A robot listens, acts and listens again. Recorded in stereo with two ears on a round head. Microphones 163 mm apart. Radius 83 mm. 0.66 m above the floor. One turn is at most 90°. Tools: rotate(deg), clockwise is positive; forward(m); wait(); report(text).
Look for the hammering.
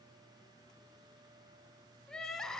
wait()
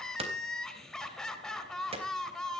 rotate(35)
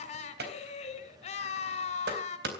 rotate(90)
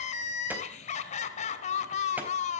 rotate(20)
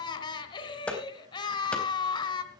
report("Facing the hammering.")